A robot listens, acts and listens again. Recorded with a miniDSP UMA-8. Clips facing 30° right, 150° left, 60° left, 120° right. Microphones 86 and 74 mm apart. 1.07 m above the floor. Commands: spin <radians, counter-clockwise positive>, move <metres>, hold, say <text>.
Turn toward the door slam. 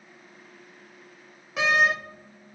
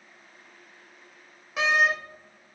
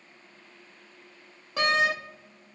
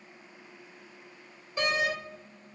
spin 1.05
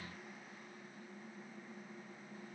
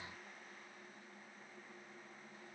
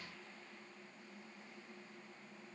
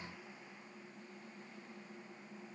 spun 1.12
say I heard a door slam from this way, but can't make it out now.